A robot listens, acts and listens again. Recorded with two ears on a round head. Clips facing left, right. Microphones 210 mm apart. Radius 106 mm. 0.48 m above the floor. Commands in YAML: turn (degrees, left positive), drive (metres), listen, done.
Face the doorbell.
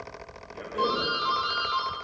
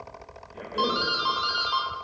turn: -55
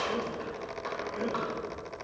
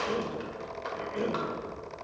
listen: true
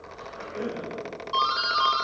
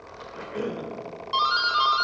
turn: -40
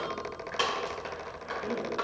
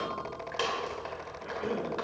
done: "Found it: a doorbell, straight ahead, 1 to 2 m away."